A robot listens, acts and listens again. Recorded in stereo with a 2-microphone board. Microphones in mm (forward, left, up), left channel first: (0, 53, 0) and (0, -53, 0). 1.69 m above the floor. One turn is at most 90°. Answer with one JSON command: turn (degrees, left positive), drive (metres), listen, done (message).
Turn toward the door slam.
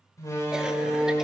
{"turn": 30}
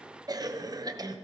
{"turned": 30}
{"listen": true}
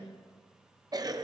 {"done": "I heard a door slam, but can't make it out now. It was about straight ahead or 120° left."}